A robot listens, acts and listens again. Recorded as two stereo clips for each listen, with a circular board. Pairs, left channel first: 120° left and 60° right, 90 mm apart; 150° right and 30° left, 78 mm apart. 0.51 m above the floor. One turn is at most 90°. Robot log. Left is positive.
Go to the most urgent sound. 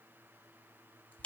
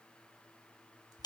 cmd idle
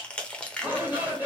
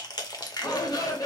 note: The shout: 125° right.
cmd yaw -90
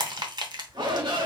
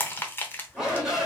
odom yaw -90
note: The shout is now 50° right.
cmd yaw -50
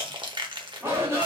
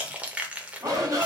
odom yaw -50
cmd fwd 1.0
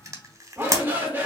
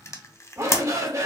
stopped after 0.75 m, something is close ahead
end: Arrived at the shout, straight ahead.